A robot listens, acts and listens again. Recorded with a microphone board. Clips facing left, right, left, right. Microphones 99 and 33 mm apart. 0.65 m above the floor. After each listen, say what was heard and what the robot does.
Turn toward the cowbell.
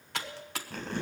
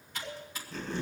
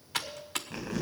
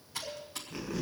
Turn 30° left.
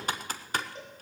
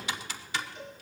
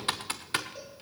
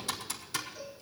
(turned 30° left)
So it is at 135° left. Turn 135° left.
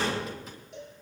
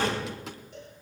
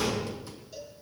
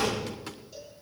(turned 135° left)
Found it: a cowbell, straight ahead, over 4 m away.